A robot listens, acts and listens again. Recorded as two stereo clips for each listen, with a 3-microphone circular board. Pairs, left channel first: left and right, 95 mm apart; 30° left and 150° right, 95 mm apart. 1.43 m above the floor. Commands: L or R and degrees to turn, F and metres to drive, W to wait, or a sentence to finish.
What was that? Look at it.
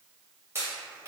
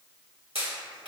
R155
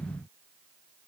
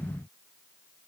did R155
Facing where the pop came from. I can't hear it now.